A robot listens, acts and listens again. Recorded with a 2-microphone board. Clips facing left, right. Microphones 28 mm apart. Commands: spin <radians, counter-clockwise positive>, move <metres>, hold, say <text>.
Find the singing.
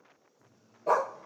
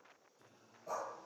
spin -1.13
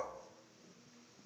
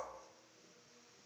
spin -0.96
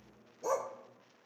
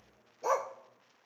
hold
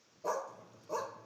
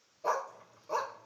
hold
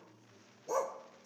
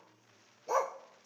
spin -0.17
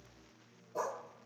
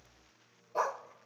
say Facing the singing, over 4 m away.